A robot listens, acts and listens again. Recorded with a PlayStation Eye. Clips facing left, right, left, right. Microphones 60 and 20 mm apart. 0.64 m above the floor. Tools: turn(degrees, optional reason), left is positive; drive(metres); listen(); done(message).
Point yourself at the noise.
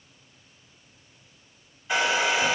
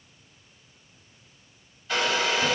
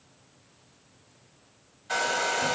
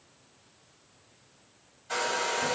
turn(degrees=20, reason="The hair dryer: about 20° left or 160° left.")
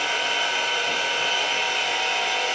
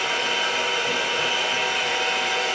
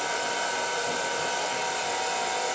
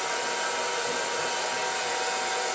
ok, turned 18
done("Facing the hair dryer, 2 to 4 m away.")